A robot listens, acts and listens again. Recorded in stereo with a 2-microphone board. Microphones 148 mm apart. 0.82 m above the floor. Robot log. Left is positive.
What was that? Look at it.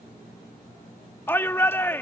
cmd yaw +30
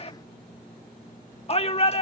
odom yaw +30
note: So it is at 135° left.
cmd yaw +135
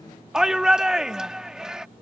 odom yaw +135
end: Found it: a shout, straight ahead.